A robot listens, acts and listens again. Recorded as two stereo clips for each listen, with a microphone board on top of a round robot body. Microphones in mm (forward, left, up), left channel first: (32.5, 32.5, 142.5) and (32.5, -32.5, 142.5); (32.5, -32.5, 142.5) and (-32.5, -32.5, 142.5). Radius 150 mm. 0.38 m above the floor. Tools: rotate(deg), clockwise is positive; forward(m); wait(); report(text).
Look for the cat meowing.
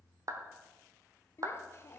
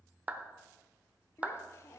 wait()
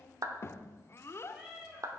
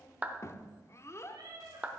rotate(170)
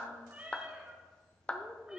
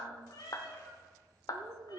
rotate(20)
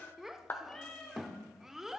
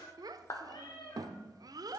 rotate(-10)
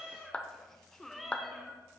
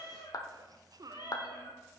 report("Found it: a cat meowing, straight ahead.")